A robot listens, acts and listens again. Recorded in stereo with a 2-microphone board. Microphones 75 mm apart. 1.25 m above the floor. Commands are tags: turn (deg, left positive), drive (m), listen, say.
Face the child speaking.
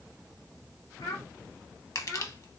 <turn deg="60"/>
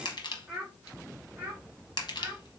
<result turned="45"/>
<turn deg="-30"/>
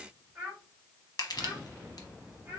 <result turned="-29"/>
<turn deg="-20"/>
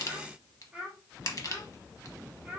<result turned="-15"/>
<turn deg="-10"/>
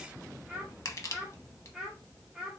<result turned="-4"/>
<say>Found it: a child speaking, straight ahead.</say>